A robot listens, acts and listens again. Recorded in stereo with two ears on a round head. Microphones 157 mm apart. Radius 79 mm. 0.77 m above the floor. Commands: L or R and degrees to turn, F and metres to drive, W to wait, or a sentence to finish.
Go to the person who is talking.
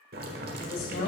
L70
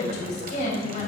L40
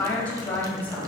L10
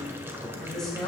F1.0
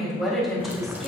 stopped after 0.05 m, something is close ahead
Blocked. The woman speaking is further on, straight ahead.